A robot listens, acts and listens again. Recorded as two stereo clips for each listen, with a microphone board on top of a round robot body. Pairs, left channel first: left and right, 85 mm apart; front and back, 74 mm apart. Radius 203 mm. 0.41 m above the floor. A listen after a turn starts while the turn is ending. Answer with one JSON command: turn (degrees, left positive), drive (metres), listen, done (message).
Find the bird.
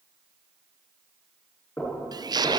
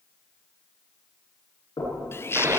{"turn": -55}
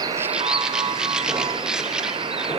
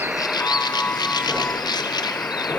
{"turn": -10}
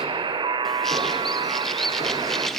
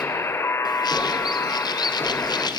{"done": "Found it: a bird, straight ahead, 1 to 2 m away."}